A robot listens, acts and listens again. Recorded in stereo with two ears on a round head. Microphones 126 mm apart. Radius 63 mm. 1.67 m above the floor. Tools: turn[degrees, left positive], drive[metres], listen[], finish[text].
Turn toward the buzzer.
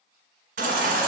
Action: listen[]
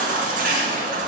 Action: listen[]
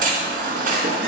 Action: finish[I can't make out a buzzer, only a baby crying.]